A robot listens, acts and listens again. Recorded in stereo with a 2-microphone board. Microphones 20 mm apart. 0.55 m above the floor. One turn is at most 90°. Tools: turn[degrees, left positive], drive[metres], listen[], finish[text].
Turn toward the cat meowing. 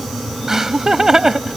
Action: listen[]
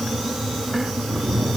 Thought: The cat meowing: about 65° right or 115° right.
Action: turn[-65]
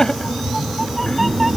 Action: finish[Facing the cat meowing.]